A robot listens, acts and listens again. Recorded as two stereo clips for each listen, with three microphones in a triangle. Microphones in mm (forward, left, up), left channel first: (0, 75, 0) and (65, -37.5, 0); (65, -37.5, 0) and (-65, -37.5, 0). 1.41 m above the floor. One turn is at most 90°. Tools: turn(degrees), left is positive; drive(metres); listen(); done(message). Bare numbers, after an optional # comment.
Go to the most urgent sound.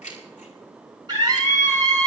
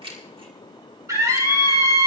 # The scream: 115° right.
turn(-90)
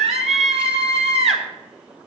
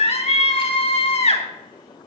# The scream is now 30° right.
turn(-30)
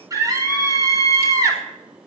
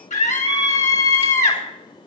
drive(1.0)
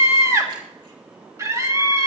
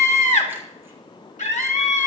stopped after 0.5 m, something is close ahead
done("Blocked. The scream is further on, straight ahead.")